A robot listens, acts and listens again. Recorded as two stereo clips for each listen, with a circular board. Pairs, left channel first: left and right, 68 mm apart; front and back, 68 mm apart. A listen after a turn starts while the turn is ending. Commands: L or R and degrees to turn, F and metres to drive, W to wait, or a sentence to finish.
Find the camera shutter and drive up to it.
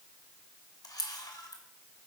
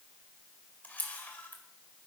L65
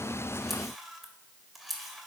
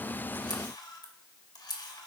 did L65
F1.0
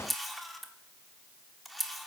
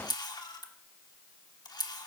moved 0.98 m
F1.0
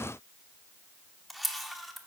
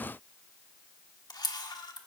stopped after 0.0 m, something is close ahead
I am next to the camera shutter.